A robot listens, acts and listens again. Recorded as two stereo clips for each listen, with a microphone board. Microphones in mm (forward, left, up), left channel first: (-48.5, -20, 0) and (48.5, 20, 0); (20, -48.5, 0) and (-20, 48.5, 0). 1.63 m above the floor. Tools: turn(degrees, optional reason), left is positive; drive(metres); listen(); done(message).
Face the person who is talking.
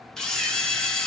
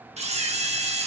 listen()
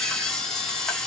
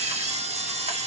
listen()
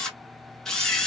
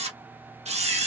done("I can't make out anyone speaking, only a camera shutter.")